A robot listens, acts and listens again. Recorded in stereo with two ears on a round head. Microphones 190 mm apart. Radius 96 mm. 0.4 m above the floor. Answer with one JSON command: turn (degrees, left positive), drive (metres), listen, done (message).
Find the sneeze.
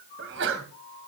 {"turn": -65}
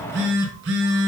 {"listen": true}
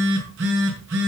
{"done": "I heard a sneeze, but can't make it out now. It was about straight ahead or 50° right."}